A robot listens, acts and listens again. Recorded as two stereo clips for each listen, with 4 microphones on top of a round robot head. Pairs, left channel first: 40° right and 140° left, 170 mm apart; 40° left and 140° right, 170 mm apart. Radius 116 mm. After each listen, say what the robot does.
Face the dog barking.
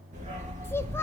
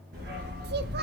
Turn 170° right.
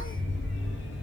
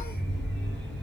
Turn 45° right.
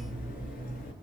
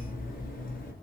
Found it: a dog barking, straight ahead, over 4 m away.